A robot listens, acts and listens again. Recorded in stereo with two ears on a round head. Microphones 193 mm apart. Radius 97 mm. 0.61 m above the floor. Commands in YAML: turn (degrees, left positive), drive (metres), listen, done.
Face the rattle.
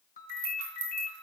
turn: -90
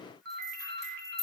done: "Found it: a rattle, straight ahead, over 4 m away."